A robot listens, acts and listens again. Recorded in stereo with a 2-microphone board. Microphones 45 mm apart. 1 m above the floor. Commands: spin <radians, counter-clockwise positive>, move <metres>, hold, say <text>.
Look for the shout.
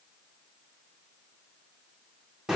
hold
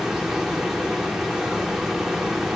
hold
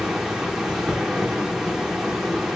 say I can't make out a shout, only a hiss.